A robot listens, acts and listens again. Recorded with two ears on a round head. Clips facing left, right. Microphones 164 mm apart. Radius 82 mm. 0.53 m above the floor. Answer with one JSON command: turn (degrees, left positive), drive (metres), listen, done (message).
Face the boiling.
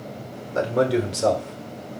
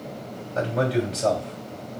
{"listen": true}
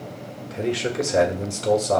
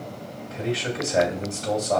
{"listen": true}
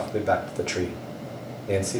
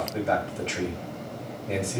{"done": "I can't make out boiling, only a man speaking."}